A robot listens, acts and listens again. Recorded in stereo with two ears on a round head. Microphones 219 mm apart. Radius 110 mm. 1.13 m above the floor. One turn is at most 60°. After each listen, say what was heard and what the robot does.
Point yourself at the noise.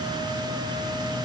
Keep listening.
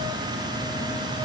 Keep listening.
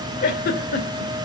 The giggle: about 40° left or 140° left. Turn 40° left.
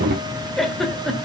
Facing the giggle, 2 to 4 m away.